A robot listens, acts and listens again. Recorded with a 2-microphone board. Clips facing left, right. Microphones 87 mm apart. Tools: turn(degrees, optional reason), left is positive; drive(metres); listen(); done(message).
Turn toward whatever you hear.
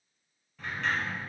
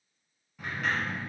turn(degrees=-30)
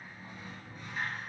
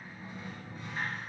turn(degrees=-145, reason="So it is at 145° right.")
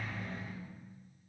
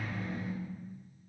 turn(degrees=-10, reason="The sliding door is now 10° right.")
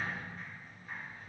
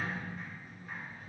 done("Found it: a sliding door, straight ahead, 1 to 2 m away.")